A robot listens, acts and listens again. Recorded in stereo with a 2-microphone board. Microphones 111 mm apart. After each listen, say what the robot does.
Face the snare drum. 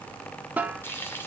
Turn 30° right.
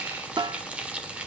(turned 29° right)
Turn 135° right.
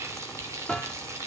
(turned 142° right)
Turn 10° left.
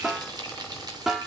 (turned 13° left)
Facing the snare drum, 1 to 2 m away.